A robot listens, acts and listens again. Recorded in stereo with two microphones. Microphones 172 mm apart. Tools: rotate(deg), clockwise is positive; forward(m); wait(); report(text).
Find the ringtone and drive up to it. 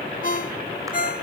rotate(-50)
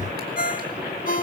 rotate(-65)
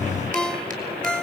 forward(1.0)
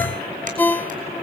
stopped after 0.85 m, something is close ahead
rotate(-15)
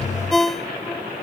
report("I am next to the ringtone.")